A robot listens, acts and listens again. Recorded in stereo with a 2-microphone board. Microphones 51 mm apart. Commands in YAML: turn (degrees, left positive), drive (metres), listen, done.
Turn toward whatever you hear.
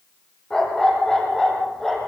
turn: 30
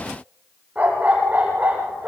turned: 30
turn: -30
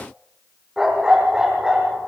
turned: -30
turn: -10
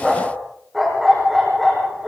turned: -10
done: "Found it: a dog barking, straight ahead."